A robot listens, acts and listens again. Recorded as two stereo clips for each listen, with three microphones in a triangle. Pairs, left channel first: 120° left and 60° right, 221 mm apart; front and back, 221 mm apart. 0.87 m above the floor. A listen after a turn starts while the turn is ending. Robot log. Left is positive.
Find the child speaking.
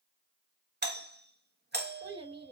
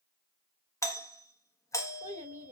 note: The child speaking: 125° right.
cmd yaw -125
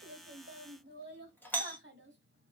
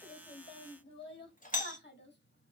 note: The child speaking is now 35° right.
cmd yaw -35
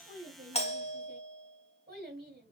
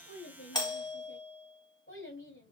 note: The child speaking is now 15° right.
cmd yaw -15
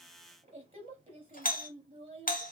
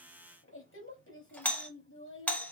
end: Found it: a child speaking, straight ahead, 2 to 4 m away.